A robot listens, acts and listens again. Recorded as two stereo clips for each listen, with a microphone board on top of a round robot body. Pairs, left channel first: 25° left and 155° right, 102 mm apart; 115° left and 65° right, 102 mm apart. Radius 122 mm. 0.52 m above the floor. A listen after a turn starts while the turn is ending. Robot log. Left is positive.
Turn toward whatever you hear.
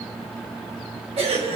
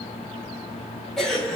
note: The cough: 160° right.
cmd yaw -160
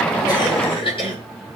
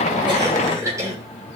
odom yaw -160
end: Facing the cough.